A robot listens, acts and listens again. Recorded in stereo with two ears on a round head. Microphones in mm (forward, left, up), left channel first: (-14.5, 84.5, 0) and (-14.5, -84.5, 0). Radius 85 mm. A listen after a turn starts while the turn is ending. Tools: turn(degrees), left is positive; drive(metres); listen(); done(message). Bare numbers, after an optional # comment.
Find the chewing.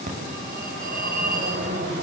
listen()
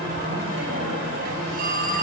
listen()
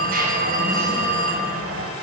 done("I can't make out chewing, only a phone ringing.")